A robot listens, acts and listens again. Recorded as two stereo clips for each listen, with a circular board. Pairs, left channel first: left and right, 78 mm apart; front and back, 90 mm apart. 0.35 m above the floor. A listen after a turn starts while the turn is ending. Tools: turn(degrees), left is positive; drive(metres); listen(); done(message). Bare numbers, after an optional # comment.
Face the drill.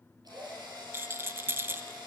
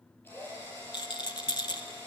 # The drill: 65° right.
turn(-65)
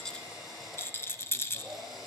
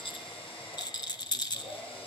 done("Found it: a drill, straight ahead, over 4 m away.")